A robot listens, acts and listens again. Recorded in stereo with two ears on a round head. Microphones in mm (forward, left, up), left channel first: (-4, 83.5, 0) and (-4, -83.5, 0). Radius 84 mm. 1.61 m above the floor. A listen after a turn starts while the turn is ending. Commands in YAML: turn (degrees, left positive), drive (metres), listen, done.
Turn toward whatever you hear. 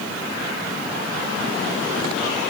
listen: true
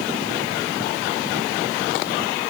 listen: true
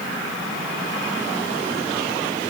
done: "I can't make out anything to turn to."